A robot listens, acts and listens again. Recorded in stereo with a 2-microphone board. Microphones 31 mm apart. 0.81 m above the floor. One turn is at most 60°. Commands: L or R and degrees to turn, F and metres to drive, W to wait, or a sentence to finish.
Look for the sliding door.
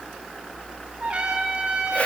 W
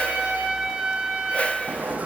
R60
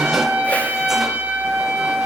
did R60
W
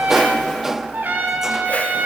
R10
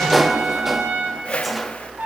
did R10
Facing the sliding door.